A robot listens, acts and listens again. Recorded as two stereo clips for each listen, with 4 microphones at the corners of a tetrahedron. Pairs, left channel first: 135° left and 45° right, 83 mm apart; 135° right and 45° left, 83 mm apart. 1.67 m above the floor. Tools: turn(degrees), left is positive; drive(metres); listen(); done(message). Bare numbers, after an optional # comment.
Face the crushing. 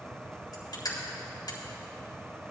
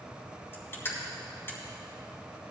# The crushing: 165° left.
turn(165)
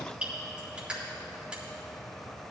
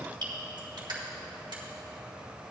# The crushing is now 30° left.
turn(30)
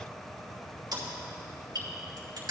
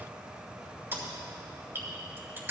# The crushing is now 15° right.
turn(-15)
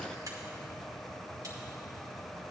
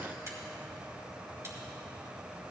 listen()
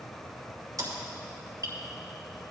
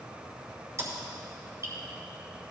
done("Found it: crushing, straight ahead, 2 to 4 m away.")